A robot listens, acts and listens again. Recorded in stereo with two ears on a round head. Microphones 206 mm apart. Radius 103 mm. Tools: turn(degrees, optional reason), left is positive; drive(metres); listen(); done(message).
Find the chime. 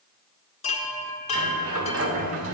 turn(degrees=30, reason="The chime: about 30° left or 150° left.")
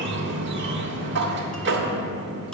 listen()
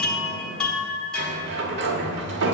done("Facing the chime.")